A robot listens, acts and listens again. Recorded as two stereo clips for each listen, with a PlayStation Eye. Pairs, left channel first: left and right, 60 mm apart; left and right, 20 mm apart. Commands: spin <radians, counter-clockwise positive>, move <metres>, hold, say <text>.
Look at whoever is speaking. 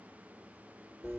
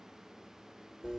hold
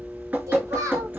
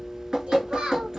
spin -1.13
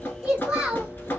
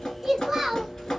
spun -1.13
spin -0.26
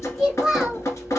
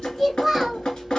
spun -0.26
say Found it: a child speaking, straight ahead, 1 to 2 m away.